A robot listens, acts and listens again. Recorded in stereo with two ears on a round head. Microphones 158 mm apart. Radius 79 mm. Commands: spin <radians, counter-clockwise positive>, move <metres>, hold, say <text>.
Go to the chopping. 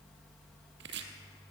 spin -1.13
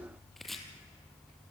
move 1.0
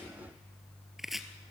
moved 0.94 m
move 1.0
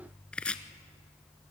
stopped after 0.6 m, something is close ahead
say Arrived at the chopping, straight ahead.